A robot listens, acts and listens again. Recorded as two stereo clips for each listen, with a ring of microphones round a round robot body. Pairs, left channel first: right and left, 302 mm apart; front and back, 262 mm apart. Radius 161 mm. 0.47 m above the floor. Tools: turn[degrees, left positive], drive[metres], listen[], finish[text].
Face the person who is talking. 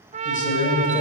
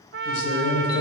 Thought: The man speaking: 25° right.
Action: turn[-25]
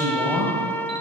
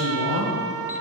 Thought: The man speaking is now 10° left.
Action: turn[10]
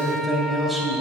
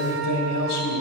Action: finish[Facing the man speaking.]